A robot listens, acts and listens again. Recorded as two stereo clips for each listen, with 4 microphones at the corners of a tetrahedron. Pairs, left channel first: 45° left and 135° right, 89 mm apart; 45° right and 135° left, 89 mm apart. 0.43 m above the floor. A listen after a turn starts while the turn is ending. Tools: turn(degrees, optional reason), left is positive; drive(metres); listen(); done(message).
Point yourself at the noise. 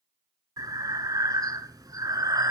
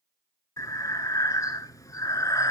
turn(degrees=-95, reason="The breathing: 95° right.")
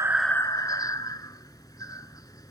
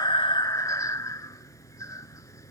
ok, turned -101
done("Facing the breathing.")